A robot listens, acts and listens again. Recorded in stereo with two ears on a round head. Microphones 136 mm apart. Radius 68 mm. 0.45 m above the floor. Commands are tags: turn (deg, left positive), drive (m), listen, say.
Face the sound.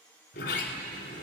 <turn deg="90"/>
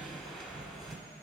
<say>Found it: a sliding door, straight ahead.</say>